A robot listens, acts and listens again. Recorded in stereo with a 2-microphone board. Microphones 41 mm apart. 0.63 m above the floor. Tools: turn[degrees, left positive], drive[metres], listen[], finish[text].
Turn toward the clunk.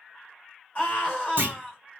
Thought: The clunk: about 60° right or 120° right.
Action: turn[-60]
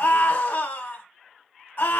Action: listen[]
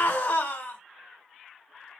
Action: finish[I heard a clunk, but can't make it out now. It was about straight ahead or 60° right.]